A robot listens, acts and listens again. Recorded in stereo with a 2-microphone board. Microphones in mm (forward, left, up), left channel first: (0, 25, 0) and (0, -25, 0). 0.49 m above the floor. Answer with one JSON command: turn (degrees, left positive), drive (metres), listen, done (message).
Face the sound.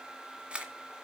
{"turn": -25}
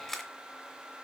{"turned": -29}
{"done": "Facing the camera shutter, 1 to 2 m away."}